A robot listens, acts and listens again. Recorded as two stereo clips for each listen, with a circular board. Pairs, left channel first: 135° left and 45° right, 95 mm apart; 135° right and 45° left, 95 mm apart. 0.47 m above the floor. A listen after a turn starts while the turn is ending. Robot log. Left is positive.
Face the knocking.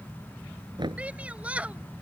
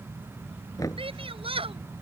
note: The knocking: 85° right.
cmd yaw -85
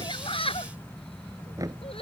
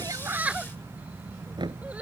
note: The knocking is now 10° left.
cmd yaw +10
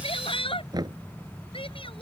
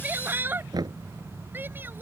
end: Found it: knocking, straight ahead.